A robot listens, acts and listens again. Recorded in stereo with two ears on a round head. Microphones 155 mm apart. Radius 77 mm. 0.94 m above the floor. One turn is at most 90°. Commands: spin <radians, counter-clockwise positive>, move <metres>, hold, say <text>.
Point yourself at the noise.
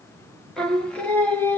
spin 0.52
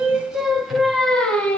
spin 0.52
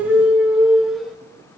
say Facing the singing, 2 to 4 m away.